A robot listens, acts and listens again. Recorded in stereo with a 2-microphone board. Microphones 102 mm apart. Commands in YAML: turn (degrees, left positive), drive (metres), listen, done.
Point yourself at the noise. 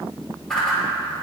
turn: 30
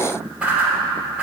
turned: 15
turn: -10
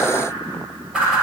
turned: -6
done: "Facing the whoosh."